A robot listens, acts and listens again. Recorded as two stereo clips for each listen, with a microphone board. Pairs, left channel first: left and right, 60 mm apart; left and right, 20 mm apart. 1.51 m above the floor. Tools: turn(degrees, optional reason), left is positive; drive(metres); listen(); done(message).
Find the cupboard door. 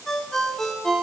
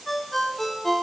listen()
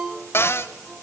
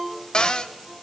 turn(degrees=40, reason="The cupboard door: about 40° left or 140° left.")
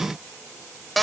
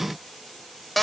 done("Found it: a cupboard door, straight ahead, 1 to 2 m away.")